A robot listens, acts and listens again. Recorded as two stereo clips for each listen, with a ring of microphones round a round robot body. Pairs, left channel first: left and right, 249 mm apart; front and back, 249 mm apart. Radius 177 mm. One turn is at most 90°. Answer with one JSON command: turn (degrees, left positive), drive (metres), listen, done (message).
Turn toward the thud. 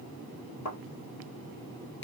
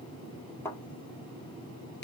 {"turn": 80}
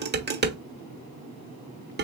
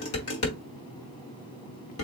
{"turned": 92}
{"turn": -10}
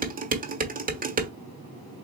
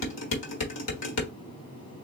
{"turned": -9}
{"done": "Facing where the thud came from. I can't hear it now."}